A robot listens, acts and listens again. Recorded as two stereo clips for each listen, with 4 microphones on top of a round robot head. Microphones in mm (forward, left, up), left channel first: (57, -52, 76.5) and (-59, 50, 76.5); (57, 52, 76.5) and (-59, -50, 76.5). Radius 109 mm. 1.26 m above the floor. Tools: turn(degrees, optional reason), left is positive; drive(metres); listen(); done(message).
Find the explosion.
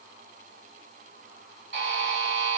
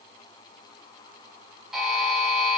listen()
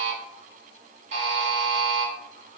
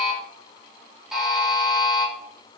listen()
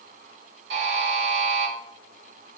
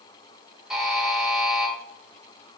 done("I can't make out an explosion, only a buzzer.")